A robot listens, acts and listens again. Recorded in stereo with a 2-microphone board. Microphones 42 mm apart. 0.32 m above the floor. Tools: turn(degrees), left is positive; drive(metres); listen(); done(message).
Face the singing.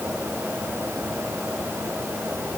listen()
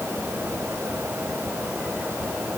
listen()
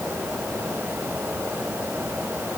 done("I can't make out singing to turn to.")